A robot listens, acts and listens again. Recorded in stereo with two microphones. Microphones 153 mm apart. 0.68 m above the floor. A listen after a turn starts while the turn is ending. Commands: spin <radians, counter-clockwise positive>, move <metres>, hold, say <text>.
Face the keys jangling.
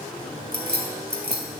spin -1.57
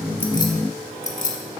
spin 0.96
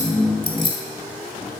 spin 0.61
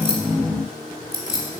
spin 0.44
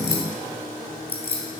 spin 0.26
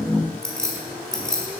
say Facing the keys jangling, 2 to 4 m away.